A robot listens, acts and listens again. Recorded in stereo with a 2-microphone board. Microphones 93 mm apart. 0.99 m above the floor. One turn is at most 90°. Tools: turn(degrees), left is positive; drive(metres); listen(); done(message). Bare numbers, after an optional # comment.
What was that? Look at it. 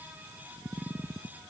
listen()
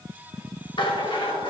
# The rattle: about 65° left or 115° left.
turn(65)
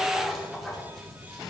done("Facing the rattle, 2 to 4 m away.")